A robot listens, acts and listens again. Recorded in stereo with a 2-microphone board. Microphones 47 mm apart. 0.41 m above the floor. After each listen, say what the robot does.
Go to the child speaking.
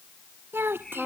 Turn 55° right.
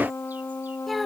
Drive 1.0 m forward.
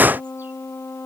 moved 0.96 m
Keep listening.
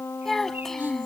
Drive 1.0 m forward.
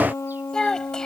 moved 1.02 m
Turn 15° left.
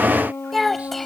Drive 1.0 m forward.
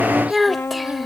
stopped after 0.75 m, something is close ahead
I am next to the child speaking.